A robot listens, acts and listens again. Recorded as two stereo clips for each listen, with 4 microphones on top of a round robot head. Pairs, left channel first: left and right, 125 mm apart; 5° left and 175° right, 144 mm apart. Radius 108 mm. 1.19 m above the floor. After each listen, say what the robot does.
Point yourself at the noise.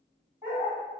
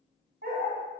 Turn 175° right.
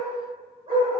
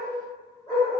Turn 70° right.
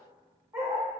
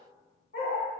Turn 35° right.
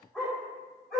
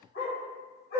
Facing the dog barking.